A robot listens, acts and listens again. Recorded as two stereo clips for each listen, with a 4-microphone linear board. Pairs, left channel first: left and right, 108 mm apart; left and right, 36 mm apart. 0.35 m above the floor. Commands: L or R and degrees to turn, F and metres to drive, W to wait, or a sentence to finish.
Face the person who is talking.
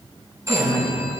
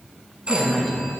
L25
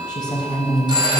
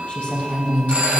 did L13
L45
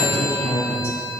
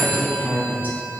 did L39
L110
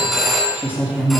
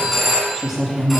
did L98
R15
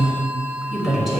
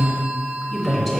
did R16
Found it: a woman speaking, straight ahead, 2 to 4 m away.